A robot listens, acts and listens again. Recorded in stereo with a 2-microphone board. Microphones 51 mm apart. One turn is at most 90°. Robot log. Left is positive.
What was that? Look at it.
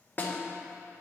note: The snare drum: about 35° left or 145° left.
cmd yaw +35
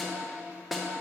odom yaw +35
end: Facing the snare drum, 1 to 2 m away.